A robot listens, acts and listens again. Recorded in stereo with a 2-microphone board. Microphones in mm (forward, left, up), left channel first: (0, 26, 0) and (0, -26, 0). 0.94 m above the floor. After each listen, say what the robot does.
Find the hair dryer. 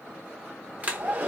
Turn 30° right.
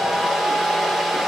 Facing the hair dryer, under 1 m away.